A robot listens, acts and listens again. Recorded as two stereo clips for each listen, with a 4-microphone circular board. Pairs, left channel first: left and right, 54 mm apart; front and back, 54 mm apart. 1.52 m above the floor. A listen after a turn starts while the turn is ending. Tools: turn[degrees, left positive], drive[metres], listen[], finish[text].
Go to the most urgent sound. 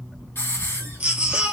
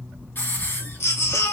Thought: The baby crying: 20° right.
Action: turn[-20]
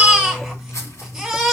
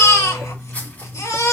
Action: drive[1.0]
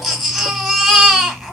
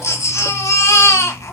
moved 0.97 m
Action: drive[1.0]
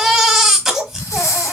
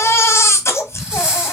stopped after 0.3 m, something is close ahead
Action: finish[Arrived at the baby crying, straight ahead.]